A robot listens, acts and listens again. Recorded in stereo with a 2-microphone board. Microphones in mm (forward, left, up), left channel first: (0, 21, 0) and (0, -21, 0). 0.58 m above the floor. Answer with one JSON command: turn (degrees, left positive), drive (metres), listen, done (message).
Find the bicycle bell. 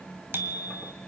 {"turn": -65}
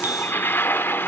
{"listen": true}
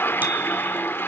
{"listen": true}
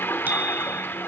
{"done": "I heard a bicycle bell, but can't make it out now. It was about straight ahead or 50° right."}